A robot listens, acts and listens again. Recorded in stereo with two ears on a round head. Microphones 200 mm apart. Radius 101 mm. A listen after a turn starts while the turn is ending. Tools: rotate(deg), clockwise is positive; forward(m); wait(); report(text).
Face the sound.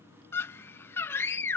rotate(-30)
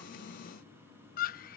rotate(-140)
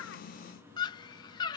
rotate(-20)
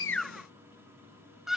report("Found it: a scream, straight ahead.")